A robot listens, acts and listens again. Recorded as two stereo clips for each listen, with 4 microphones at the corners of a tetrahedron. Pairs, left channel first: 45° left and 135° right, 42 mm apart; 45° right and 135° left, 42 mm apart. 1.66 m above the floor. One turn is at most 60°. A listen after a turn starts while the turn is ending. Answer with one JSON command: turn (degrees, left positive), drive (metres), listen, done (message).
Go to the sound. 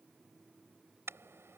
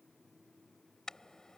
{"turn": -60}
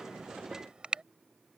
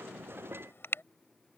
{"turn": -60}
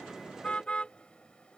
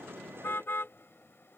{"turn": -20}
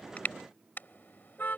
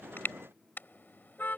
{"drive": 1.0}
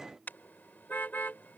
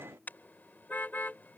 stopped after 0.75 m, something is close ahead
{"done": "Something is in my way. I am facing the car horn but have not reached it."}